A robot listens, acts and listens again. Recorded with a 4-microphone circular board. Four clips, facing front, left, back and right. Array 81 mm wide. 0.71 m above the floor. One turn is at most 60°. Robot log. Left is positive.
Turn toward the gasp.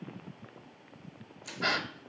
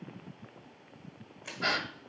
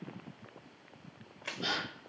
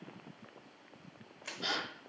note: The gasp: 45° left.
cmd yaw +45
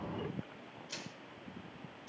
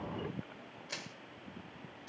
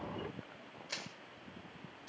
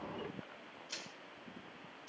end: Facing where the gasp came from. I can't hear it now.